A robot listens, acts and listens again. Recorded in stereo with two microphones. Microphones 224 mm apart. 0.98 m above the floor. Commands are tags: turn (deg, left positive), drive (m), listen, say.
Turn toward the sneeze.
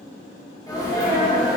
<turn deg="15"/>
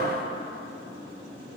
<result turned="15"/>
<listen/>
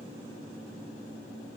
<say>I heard a sneeze, but can't make it out now. It was about straight ahead or 150° left.</say>